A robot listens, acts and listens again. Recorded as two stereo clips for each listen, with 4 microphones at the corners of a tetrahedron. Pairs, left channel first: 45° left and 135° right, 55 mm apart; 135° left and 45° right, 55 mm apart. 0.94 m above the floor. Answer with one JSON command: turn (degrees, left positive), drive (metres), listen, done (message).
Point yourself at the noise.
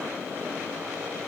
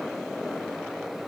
{"listen": true}
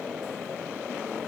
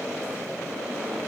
{"listen": true}
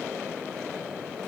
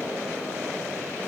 {"done": "I can't make out anything."}